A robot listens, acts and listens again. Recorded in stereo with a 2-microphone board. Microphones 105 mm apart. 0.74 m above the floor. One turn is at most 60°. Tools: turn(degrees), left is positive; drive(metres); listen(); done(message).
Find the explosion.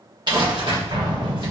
turn(degrees=-45)
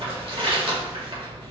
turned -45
listen()
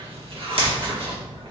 done("I heard an explosion, but can't make it out now. It was about straight ahead or 90° right.")